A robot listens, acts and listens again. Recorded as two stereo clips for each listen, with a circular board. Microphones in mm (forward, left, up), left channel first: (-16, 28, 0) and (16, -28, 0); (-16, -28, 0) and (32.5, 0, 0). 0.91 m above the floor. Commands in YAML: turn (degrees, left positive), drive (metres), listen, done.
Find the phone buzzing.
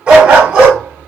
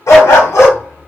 listen: true
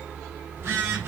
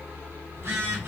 turn: -10
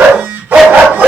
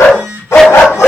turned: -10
done: "Facing the phone buzzing."